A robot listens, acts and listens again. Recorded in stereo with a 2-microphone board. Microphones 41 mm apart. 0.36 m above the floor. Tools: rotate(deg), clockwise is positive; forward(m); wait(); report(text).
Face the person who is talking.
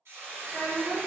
rotate(45)
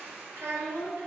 rotate(85)
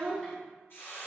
rotate(-15)
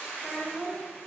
report("Found it: a child speaking, straight ahead, 1 to 2 m away.")